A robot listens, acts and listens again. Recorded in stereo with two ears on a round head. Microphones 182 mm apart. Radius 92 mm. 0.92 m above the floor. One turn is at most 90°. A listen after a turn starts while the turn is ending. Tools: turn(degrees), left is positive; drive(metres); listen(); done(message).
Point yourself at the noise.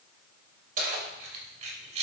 turn(degrees=-35)
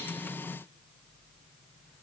listen()
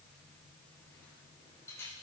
turn(degrees=15)
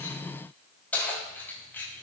turn(degrees=10)
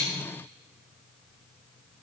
listen()
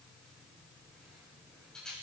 done("Found it: keys jangling, straight ahead.")